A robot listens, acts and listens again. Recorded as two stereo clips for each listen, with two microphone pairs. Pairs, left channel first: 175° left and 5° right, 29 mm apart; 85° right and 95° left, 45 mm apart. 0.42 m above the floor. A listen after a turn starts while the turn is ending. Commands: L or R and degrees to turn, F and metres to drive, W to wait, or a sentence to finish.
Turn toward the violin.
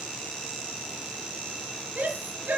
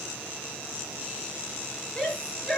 W
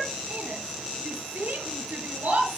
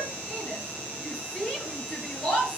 W
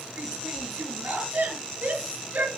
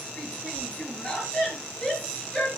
I can't make out a violin, only a shout.